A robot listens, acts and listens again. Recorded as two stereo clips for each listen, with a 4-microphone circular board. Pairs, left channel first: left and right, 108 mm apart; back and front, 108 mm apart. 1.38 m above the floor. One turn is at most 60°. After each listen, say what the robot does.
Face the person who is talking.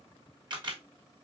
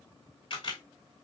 Keep listening.
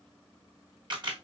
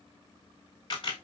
Keep listening.
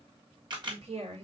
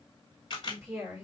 Turn 60° right.
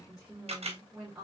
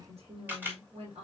Found it: a woman speaking, straight ahead.